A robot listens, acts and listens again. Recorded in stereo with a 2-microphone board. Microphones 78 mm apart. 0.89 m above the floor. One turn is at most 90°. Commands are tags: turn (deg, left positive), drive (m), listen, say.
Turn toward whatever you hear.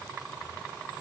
<listen/>
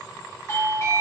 <turn deg="35"/>
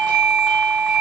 <say>Found it: a doorbell, straight ahead, 1 to 2 m away.</say>